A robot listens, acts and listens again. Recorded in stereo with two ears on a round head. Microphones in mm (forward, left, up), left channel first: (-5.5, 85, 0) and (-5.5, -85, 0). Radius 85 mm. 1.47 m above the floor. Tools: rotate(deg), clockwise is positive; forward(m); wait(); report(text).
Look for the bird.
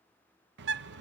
rotate(65)
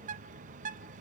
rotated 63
rotate(45)
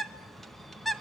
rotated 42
report("Facing the bird, under 1 m away.")